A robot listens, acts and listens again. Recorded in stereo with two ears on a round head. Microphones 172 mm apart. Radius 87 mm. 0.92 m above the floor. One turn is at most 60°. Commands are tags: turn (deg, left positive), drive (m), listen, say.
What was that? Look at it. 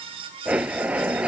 <turn deg="-30"/>
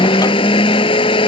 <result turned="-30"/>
<turn deg="25"/>
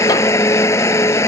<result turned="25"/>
<turn deg="15"/>
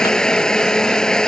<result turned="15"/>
<say>Facing the blender.</say>